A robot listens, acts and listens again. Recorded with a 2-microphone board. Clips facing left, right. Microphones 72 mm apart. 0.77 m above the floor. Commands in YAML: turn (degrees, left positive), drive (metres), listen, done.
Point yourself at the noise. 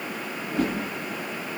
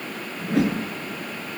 turn: -75
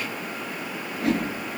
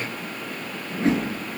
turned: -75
turn: -30
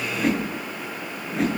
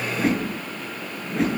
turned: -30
done: "Facing the whoosh, over 4 m away."